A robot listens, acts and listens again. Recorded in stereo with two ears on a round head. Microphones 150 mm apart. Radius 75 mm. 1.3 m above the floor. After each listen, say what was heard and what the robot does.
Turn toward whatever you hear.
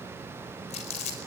The crumpling: about 40° left or 140° left. Turn 40° left.
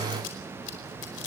So it is at 100° left. Turn 100° left.
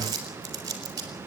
The crumpling is now 25° right. Turn 25° right.
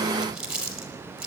Facing the crumpling.